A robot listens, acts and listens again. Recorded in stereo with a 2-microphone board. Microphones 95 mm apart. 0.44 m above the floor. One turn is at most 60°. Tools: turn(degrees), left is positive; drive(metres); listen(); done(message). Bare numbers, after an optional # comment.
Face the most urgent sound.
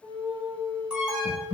turn(-30)
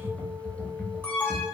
# So it is at 15° left.
turn(15)
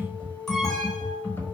listen()
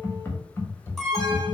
done("Found it: an alarm, straight ahead, under 1 m away.")